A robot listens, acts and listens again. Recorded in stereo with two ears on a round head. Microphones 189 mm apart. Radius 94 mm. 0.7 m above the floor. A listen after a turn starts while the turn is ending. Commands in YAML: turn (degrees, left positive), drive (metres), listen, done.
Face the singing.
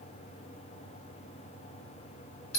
listen: true
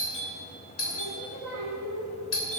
turn: 75
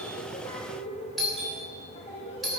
turn: 30
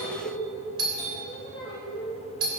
done: "Found it: singing, straight ahead."